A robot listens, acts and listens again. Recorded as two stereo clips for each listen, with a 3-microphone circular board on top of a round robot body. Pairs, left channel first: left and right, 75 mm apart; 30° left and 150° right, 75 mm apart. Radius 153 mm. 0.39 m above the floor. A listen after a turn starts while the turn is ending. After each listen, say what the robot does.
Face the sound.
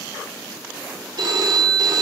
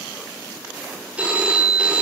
Turn 75° right.
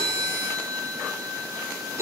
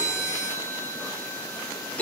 Turn 40° right.
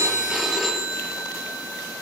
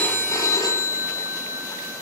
Found it: a phone ringing, straight ahead.